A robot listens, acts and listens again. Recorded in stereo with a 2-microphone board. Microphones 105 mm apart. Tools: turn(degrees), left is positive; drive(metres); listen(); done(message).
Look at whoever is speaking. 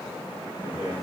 turn(degrees=-25)
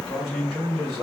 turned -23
done("Found it: a man speaking, straight ahead.")